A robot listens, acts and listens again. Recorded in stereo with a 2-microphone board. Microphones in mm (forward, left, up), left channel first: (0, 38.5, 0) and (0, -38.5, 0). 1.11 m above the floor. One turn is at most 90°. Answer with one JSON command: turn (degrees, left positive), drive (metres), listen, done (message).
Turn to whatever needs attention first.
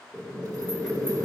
{"listen": true}
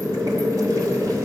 {"listen": true}
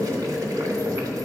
{"done": "I can't make out anything urgent to turn to."}